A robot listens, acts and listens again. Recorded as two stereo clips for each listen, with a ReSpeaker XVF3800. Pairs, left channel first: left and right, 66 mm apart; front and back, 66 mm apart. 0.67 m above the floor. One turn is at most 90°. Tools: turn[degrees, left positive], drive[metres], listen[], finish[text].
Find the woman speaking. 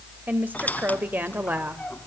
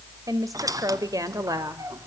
Thought: The woman speaking: 150° right.
Action: turn[-90]
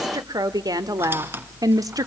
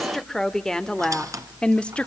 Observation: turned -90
Thought: The woman speaking is now 70° right.
Action: turn[-70]
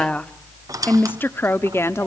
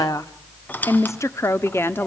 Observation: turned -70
Thought: The woman speaking is now 50° left.
Action: turn[50]
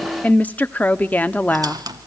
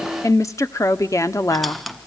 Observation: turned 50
Thought: The woman speaking is now 25° left.
Action: turn[25]
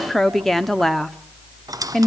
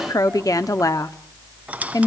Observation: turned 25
Action: finish[Found it: a woman speaking, straight ahead, 1 to 2 m away.]